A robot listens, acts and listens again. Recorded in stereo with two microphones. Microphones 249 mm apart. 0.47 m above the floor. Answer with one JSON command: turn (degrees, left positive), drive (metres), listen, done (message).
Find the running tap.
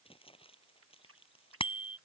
{"turn": -60}
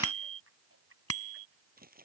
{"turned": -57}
{"turn": -60}
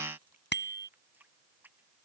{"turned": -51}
{"done": "Found it: a running tap, straight ahead."}